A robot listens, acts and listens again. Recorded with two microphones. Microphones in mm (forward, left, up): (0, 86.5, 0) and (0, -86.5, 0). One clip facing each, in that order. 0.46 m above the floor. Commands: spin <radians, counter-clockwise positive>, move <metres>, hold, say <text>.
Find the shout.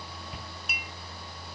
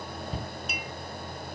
spin -0.61
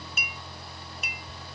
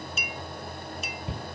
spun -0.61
spin -1.83
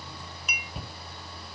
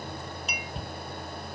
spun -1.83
say Facing the shout.